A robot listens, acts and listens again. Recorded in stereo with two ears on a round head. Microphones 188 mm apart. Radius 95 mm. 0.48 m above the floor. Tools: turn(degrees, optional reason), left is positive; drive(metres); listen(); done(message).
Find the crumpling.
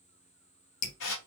listen()
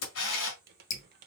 turn(degrees=-50, reason="The crumpling: about 50° right or 130° right.")
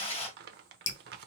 turn(degrees=-65, reason="So it is at 65° right.")
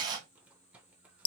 turn(degrees=-10, reason="The crumpling is now 10° right.")
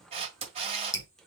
done("Found it: crumpling, straight ahead.")